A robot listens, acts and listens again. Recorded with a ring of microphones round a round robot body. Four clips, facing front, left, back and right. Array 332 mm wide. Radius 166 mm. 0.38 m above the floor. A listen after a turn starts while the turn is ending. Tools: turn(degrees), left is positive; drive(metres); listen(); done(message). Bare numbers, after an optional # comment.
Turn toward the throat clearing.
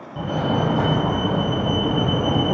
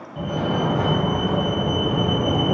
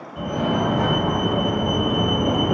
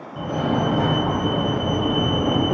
listen()
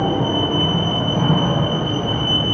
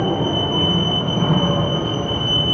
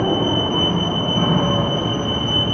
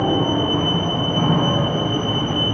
listen()
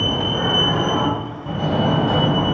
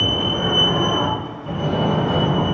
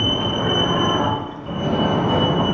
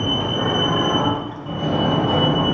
done("I can't make out throat clearing to turn to.")